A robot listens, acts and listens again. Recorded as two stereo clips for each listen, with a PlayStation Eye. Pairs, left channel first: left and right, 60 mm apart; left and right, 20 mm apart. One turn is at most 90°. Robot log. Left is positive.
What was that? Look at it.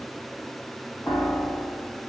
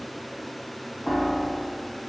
note: The piano: about 40° left or 140° left.
cmd yaw +40
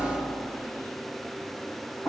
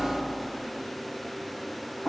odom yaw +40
note: So it is at 95° left.
cmd yaw +90
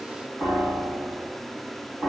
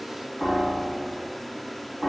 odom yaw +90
note: The piano is now 10° left.
cmd yaw +10
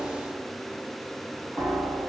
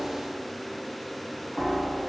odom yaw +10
end: Found it: a piano, straight ahead, 1 to 2 m away.